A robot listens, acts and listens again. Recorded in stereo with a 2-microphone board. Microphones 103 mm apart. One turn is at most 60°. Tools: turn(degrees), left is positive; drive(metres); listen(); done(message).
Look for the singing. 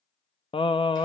turn(degrees=60)
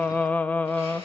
turn(degrees=20)
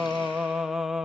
done("Facing the singing, under 1 m away.")